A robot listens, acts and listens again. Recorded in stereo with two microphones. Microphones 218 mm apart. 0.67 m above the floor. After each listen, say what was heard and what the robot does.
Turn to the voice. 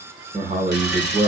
The man speaking: about 35° right or 145° right. Turn 35° right.
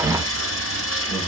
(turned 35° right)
Keep listening.
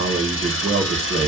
So it is at 110° right. Turn 110° right.
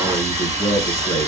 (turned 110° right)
The man speaking is now 15° left. Turn 15° left.
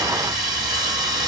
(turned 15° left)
Keep listening.
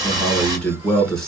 Facing the man speaking, 1 to 2 m away.